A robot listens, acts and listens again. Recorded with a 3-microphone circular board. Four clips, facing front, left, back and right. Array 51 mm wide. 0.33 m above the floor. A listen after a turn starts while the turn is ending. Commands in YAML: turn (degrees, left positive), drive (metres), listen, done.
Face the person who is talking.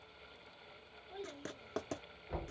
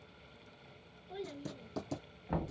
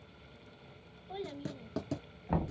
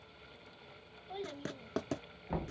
turn: -140
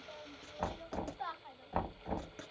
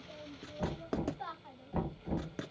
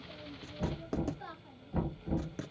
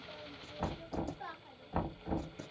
turn: 25
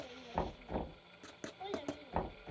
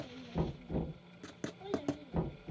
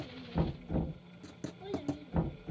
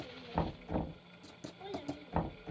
turn: -10
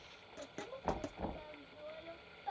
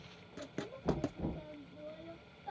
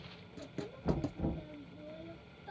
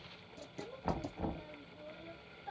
done: "Found it: a child speaking, straight ahead."